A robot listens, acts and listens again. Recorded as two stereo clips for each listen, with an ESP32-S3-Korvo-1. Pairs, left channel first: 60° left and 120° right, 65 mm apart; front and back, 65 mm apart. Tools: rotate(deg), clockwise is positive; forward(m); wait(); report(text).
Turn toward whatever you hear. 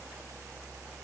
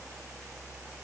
wait()
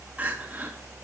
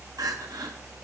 rotate(-175)
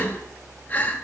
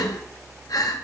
report("Found it: crying, straight ahead.")